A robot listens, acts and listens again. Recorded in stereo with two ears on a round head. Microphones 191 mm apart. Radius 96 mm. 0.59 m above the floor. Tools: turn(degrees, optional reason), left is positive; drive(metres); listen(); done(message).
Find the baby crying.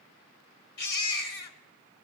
turn(degrees=90)
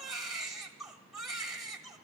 done("Facing the baby crying, 1 to 2 m away.")